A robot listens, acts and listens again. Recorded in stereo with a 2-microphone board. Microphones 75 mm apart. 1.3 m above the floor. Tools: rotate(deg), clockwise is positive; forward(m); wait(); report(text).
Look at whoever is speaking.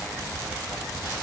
wait()
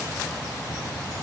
wait()
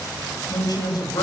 rotate(-55)
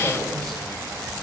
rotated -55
wait()
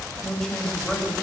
report("Facing the woman speaking, over 4 m away.")